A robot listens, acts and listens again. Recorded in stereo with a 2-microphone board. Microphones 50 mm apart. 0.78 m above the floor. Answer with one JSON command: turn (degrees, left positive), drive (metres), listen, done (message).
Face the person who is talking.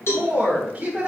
{"turn": -25}
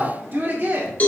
{"turn": -45}
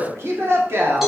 {"turn": -120}
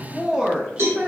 {"turn": -30}
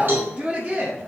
{"turn": -30}
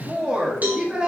{"turn": -25}
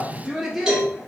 {"done": "Found it: a woman speaking, straight ahead."}